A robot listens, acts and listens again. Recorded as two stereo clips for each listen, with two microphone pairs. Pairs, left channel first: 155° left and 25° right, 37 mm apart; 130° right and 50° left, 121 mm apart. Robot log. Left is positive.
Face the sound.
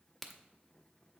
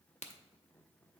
note: The crack: 120° right.
cmd yaw -120
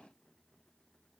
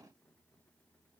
end: Facing where the crack came from. I can't hear it now.